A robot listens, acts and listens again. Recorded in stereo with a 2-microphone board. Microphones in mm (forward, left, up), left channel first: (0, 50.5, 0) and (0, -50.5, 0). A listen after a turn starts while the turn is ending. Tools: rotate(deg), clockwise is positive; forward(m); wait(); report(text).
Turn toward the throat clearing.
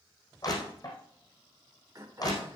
rotate(35)
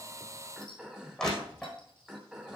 rotate(10)
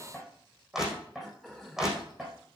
report("Found it: throat clearing, straight ahead.")